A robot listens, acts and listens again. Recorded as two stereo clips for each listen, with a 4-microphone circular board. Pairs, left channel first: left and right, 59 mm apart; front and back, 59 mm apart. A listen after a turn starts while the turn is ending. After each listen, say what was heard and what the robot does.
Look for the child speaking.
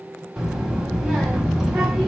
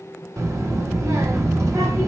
The child speaking: 170° right. Turn 170° right.
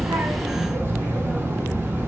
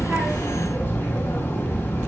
The child speaking is now 55° right. Turn 55° right.
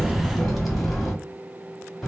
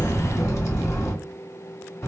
Facing the child speaking.